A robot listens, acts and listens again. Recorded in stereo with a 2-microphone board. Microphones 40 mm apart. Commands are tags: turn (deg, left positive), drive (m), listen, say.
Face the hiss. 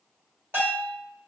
<listen/>
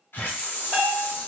<turn deg="70"/>
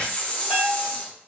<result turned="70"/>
<turn deg="30"/>
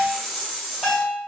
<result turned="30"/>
<say>Found it: a hiss, straight ahead, under 1 m away.</say>